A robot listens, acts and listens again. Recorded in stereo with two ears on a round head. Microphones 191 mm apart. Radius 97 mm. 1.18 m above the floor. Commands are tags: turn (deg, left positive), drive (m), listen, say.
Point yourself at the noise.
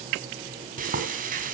<turn deg="-40"/>
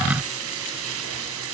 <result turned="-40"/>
<turn deg="-95"/>
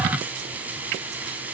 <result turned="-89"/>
<turn deg="-10"/>
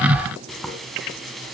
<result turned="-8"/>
<say>Found it: frying, straight ahead, 2 to 4 m away.</say>